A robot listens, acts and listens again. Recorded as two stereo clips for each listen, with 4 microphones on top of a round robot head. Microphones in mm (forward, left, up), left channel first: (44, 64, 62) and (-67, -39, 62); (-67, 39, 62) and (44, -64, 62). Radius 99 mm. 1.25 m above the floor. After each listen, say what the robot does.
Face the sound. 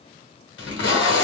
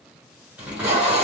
Turn 40° left.
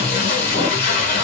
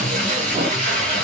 Facing the tape being pulled.